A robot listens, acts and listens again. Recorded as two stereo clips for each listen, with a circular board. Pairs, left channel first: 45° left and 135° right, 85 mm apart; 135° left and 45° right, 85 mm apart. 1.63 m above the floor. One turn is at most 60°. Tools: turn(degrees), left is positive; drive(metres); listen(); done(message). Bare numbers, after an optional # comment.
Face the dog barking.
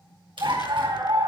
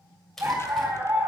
# The dog barking: 105° right.
turn(-60)
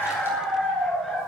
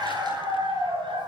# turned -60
# The dog barking is now 45° right.
turn(-45)
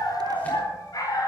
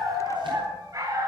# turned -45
done("Found it: a dog barking, straight ahead.")